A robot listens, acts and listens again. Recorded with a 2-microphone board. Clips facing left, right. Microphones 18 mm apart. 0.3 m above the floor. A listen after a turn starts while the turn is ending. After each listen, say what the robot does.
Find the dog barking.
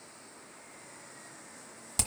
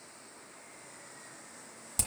Keep listening.
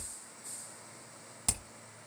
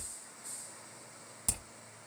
Keep listening.
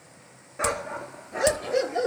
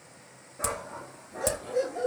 Turn 75° left.
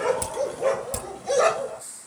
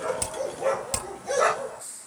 Turn 10° left.
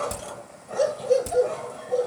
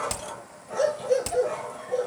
Found it: a dog barking, straight ahead.